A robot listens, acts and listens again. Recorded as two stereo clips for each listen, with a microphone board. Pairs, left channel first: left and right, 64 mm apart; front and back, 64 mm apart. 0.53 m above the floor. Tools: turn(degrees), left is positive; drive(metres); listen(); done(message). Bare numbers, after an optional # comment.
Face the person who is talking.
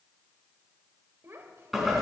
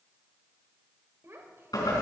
# The child speaking: 135° right.
turn(-135)
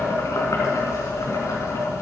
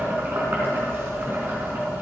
listen()
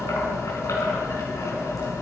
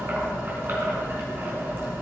listen()
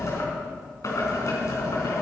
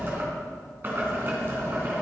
done("Facing where the child speaking came from. I can't hear it now.")